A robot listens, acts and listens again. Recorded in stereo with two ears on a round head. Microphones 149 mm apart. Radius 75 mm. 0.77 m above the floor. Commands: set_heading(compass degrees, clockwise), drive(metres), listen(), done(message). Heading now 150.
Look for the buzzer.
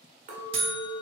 set_heading(185)
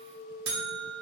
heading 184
set_heading(294)
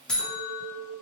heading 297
done("Facing the buzzer, under 1 m away.")